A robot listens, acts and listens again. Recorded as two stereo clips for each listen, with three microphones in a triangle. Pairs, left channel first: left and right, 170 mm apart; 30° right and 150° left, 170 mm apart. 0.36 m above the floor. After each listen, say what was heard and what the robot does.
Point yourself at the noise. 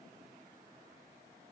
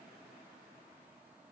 Keep listening.
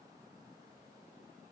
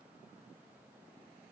Keep listening.
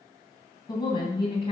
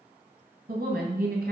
The woman speaking: 145° left. Turn 145° left.
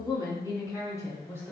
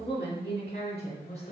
The woman speaking is now 15° left. Turn 15° left.
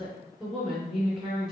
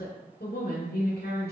Found it: a woman speaking, straight ahead, 2 to 4 m away.